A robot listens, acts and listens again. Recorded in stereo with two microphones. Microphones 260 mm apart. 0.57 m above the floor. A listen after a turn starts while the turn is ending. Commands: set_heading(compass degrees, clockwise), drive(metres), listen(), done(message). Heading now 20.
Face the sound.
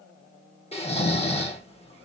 set_heading(355)
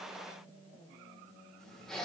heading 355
done("Facing the snoring, under 1 m away.")